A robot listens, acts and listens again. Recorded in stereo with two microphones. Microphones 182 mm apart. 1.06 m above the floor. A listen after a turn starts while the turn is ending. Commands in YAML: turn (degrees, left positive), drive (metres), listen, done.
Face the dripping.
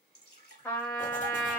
turn: 65
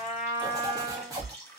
turn: 20
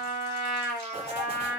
listen: true
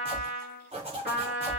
listen: true
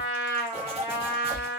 done: "Facing where the dripping came from. I can't hear it now."